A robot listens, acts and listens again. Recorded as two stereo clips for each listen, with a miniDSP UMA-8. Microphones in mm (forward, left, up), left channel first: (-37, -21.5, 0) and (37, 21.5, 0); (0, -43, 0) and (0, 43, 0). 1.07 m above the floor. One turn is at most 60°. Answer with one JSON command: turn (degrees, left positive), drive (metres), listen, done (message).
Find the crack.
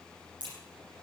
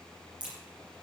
{"turn": 15}
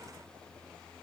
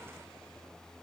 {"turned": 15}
{"done": "Facing where the crack came from. I can't hear it now."}